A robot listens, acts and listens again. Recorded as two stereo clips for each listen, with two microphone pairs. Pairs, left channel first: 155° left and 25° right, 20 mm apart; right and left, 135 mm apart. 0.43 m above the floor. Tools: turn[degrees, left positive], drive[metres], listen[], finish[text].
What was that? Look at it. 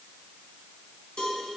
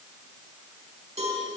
Thought: The cowbell: 120° left.
Action: turn[120]
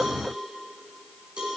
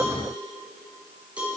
Action: finish[Found it: a cowbell, straight ahead, 2 to 4 m away.]